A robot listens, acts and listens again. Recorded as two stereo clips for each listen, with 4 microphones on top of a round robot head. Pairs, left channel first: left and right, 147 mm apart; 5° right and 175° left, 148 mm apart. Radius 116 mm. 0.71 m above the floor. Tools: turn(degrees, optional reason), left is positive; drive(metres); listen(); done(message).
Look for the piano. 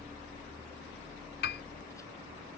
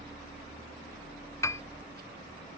turn(degrees=65, reason="The piano: 65° left.")
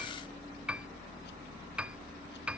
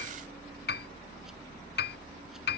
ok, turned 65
done("Facing the piano.")